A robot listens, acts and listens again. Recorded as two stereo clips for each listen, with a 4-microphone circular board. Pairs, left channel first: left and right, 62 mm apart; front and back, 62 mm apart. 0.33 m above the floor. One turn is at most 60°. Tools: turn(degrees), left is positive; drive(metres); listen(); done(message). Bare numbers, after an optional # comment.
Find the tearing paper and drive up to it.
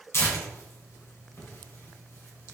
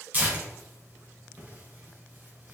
# The tearing paper: 125° left.
turn(60)
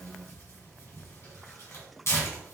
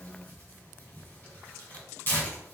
# The tearing paper is now 50° left.
turn(50)
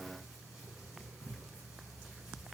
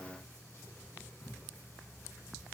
# The tearing paper is now 15° right.
turn(-15)
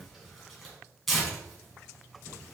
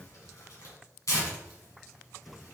drive(1.0)
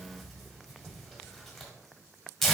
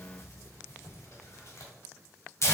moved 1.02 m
drive(1.0)
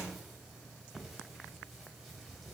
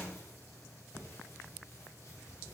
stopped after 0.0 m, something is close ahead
listen()
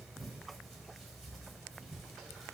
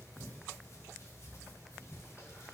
done("I am next to the tearing paper.")